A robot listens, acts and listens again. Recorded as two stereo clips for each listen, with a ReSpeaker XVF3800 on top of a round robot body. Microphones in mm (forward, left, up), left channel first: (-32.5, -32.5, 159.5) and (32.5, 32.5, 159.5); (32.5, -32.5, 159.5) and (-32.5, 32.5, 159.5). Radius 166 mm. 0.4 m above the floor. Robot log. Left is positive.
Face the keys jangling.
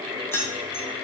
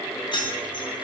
note: The keys jangling: 75° right.
cmd yaw -75
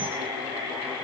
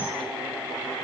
cmd idle
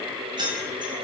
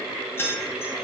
note: The keys jangling is now 20° left.
cmd yaw +20
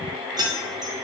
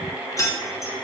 end: Facing the keys jangling, under 1 m away.